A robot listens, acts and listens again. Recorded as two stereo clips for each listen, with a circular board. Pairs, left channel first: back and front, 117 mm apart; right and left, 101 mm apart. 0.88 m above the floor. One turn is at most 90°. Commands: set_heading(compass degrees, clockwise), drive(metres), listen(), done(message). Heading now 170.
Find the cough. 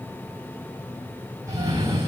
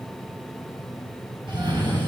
set_heading(110)
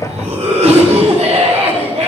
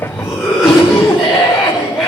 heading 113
done("Facing the cough, 2 to 4 m away.")